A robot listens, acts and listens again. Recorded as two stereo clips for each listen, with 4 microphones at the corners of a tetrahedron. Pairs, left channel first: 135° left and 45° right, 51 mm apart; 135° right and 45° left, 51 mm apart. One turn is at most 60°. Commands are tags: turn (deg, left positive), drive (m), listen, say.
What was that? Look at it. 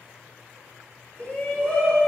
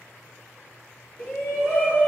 <turn deg="60"/>
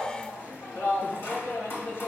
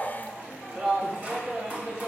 <turn deg="60"/>
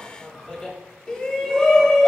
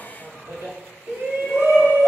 <turn deg="60"/>
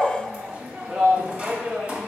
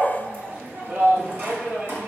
<turn deg="10"/>
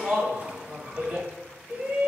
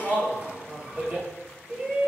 <say>Found it: a shout, straight ahead, 1 to 2 m away.</say>